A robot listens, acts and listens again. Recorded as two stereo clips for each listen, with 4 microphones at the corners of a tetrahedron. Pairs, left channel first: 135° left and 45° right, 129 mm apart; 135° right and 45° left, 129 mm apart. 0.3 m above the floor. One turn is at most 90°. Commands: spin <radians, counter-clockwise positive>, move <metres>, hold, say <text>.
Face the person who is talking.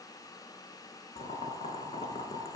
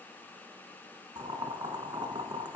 hold
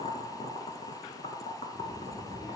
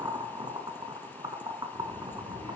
spin -1.57
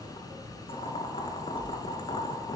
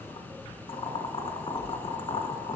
spin -0.52
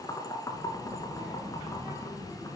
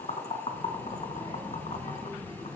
spin -0.17
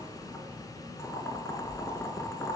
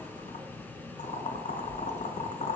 say Facing the child speaking, over 4 m away.